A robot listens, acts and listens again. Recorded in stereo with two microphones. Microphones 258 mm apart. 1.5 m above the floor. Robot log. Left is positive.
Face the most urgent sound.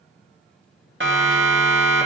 note: The siren: about 50° right or 130° right.
cmd yaw -50
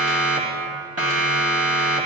note: So it is at 75° right.
cmd yaw -75
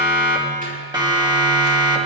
note: The siren is now 20° right.
cmd yaw -20
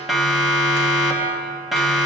end: Facing the siren, 2 to 4 m away.